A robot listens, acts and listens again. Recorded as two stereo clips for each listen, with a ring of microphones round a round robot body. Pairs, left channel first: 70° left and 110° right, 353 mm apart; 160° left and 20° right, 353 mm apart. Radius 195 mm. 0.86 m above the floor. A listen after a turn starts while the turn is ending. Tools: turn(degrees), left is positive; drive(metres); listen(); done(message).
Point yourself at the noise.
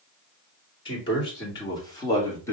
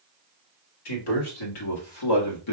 turn(degrees=150)
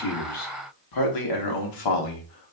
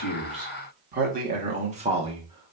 turn(degrees=55)
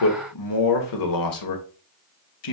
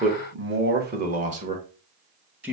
turn(degrees=65)
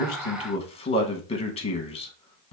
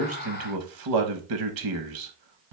done("Facing the man speaking.")